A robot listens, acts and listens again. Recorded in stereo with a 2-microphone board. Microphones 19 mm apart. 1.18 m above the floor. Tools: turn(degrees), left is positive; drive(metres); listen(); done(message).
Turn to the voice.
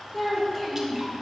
turn(degrees=30)
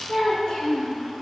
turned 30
turn(degrees=130)
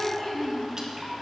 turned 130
turn(degrees=30)
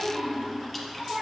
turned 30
turn(degrees=-20)
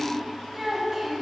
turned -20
done("Facing the child speaking, 2 to 4 m away.")